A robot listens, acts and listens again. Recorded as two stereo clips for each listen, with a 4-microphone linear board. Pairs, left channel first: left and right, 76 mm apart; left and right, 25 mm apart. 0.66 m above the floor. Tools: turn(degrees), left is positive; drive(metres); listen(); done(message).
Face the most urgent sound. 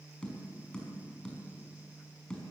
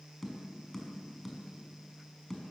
listen()
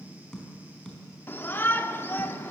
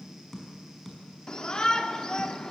turn(degrees=30)
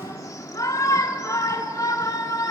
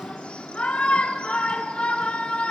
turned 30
turn(degrees=110)
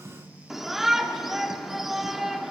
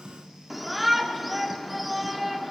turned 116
done("Found it: a shout, straight ahead.")